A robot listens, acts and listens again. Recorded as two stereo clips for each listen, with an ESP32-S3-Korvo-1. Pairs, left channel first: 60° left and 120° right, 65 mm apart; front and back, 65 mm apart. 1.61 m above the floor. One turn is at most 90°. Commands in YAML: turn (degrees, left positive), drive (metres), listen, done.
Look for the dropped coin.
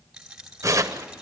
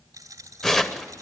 turn: 90
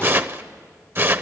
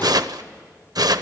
turn: 70
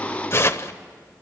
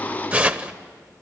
done: "Facing where the dropped coin came from. I can't hear it now."